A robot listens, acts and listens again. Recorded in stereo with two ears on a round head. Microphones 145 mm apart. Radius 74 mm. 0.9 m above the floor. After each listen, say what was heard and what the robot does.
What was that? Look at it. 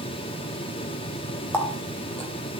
Turn 30° left.
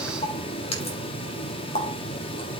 So it is at 140° left. Turn 140° left.
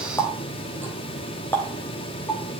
The running tap is now 10° left. Turn 10° left.
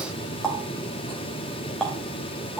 Facing the running tap, 2 to 4 m away.